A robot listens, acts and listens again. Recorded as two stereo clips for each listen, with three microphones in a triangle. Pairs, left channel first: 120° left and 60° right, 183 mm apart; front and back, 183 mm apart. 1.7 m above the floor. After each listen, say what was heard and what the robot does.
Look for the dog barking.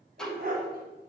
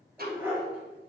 The dog barking: 100° right. Turn 100° right.
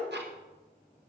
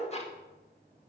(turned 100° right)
Keep listening.
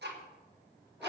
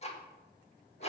Keep listening.
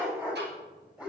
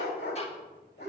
The dog barking is now 20° left. Turn 20° left.
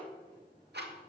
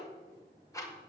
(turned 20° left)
Keep listening.
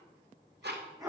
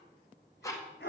Found it: a dog barking, straight ahead.